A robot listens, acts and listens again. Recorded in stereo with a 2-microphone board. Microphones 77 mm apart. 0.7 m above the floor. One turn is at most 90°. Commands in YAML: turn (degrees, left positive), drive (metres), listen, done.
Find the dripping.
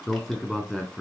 listen: true
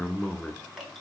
turn: 30
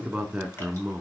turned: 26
listen: true
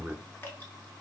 listen: true
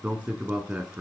done: "I heard dripping, but can't make it out now. It was about 25° right or 150° left."